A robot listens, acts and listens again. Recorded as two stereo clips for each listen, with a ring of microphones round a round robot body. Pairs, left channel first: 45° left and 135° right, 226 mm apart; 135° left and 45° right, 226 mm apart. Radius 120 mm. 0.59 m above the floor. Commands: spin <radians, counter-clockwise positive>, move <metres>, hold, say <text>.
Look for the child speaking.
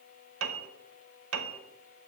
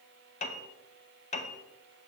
hold
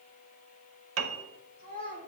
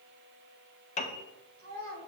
spin -1.48
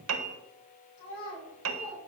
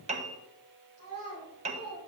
spin -0.26
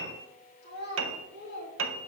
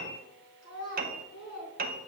say Found it: a child speaking, straight ahead, over 4 m away.